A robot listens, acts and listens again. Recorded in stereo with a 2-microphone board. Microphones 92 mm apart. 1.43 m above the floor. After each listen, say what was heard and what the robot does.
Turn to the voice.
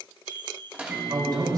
The man speaking: about 50° right or 130° right. Turn 50° right.
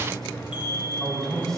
Found it: a man speaking, straight ahead, over 4 m away.